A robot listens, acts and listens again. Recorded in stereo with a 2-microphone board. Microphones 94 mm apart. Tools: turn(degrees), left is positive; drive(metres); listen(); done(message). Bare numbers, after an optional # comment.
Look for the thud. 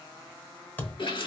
# The thud: about 20° left or 160° left.
turn(20)
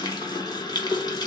listen()
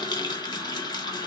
done("I heard a thud, but can't make it out now. It was about straight ahead or 140° left.")